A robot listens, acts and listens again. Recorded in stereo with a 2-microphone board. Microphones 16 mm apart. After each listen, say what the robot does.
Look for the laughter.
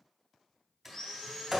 Keep listening.
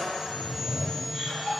Turn 55° left.
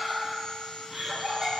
Turn 20° right.
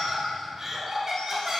Turn 20° right.
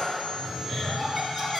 Facing the laughter.